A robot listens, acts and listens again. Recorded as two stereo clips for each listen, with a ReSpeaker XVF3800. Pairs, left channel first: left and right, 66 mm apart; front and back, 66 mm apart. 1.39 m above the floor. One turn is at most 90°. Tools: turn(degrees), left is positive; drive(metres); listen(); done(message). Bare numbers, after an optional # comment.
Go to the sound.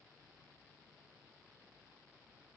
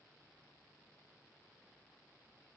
listen()
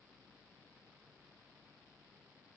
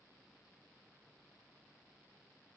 listen()
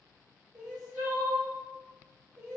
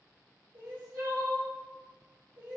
# The crying: 165° right.
turn(-90)
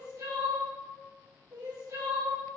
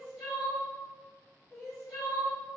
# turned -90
# The crying is now 85° right.
turn(-85)
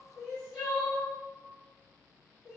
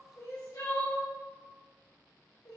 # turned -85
# The crying is now 10° left.
turn(10)
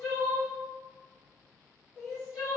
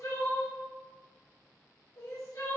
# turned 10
drive(1.0)
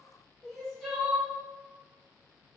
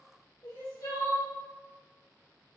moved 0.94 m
drive(1.0)
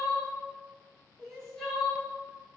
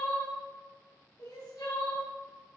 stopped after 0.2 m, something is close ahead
# The crying is now 10° left.
turn(10)
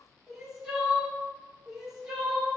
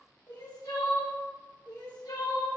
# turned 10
done("I am next to the crying.")